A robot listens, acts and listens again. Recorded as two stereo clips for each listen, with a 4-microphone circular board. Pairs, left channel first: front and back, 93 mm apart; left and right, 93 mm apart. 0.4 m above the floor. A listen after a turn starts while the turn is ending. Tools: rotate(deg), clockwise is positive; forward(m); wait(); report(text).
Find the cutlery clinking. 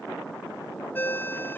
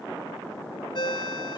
wait()
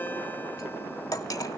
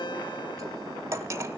rotate(40)
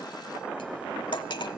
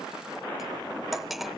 report("Found it: cutlery clinking, straight ahead.")